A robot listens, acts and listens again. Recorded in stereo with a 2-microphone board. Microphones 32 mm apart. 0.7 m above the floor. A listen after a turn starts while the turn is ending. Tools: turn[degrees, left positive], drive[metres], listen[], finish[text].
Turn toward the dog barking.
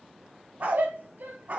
Thought: The dog barking: about 50° right or 130° right.
Action: turn[-50]
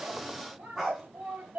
Action: finish[Facing the dog barking.]